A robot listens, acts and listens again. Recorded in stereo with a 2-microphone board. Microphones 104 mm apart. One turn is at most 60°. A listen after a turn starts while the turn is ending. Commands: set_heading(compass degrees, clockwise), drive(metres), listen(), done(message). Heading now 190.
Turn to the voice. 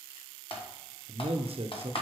set_heading(250)
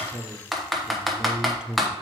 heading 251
set_heading(261)
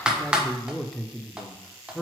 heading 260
done("Found it: a man speaking, straight ahead, under 1 m away.")